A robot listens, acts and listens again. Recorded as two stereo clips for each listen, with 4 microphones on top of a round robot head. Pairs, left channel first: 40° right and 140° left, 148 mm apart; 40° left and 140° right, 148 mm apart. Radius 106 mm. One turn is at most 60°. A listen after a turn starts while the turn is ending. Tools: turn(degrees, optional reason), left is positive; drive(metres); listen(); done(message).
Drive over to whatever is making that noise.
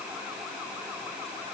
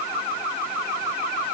listen()
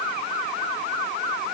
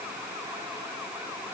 listen()
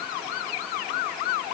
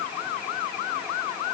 done("I can't make out anything to turn to.")